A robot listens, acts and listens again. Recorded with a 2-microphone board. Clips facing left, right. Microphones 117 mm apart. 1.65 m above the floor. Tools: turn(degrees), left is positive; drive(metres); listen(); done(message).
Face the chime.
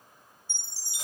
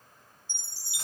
turn(degrees=35)
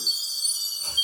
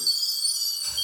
done("Found it: a chime, straight ahead, 2 to 4 m away.")